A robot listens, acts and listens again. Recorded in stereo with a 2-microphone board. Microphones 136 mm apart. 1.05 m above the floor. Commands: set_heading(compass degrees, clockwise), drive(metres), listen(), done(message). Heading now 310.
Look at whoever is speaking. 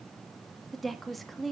set_heading(280)
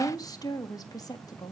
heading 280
set_heading(130)
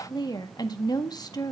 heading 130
set_heading(100)
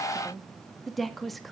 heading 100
done("Found it: a woman speaking, straight ahead, 1 to 2 m away.")